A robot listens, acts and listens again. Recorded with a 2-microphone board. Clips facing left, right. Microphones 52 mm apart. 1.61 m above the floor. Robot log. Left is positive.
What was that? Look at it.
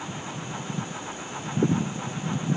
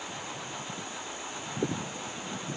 cmd idle
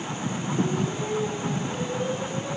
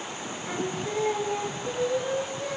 note: The singing: about 70° right or 110° right.
cmd yaw -70
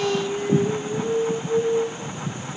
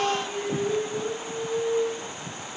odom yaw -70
note: So it is at 10° left.
cmd yaw +10
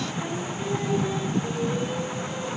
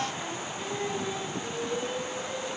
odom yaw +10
cmd idle
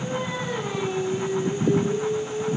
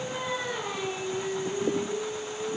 end: Found it: singing, straight ahead, over 4 m away.